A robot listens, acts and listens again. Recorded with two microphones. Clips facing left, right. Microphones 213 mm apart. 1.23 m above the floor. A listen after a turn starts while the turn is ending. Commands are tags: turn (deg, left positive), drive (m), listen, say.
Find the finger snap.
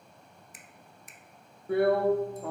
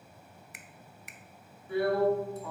<turn deg="-70"/>
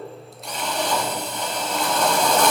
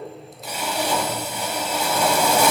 <listen/>
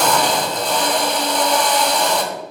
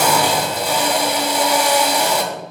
<listen/>
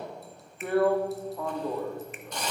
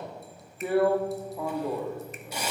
<say>I heard a finger snap, but can't make it out now. It was about straight ahead or 40° right.</say>